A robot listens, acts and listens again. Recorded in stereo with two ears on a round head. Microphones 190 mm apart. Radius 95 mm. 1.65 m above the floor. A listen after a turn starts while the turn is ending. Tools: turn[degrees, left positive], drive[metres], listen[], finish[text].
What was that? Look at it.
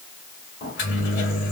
Thought: The microwave: about 40° left or 140° left.
Action: turn[40]
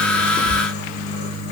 Thought: So it is at 100° left.
Action: turn[100]
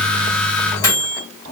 Thought: The microwave is now 20° left.
Action: turn[20]
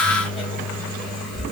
Action: finish[Found it: a microwave, straight ahead, 2 to 4 m away.]